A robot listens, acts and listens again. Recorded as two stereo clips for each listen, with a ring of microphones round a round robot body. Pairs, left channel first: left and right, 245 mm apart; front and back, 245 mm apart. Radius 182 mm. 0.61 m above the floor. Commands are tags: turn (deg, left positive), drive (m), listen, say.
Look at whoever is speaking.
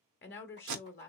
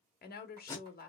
<turn deg="50"/>
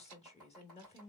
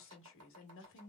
<turn deg="25"/>
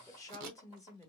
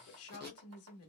<turn deg="15"/>
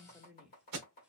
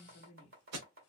<say>Found it: a woman speaking, straight ahead, 1 to 2 m away.</say>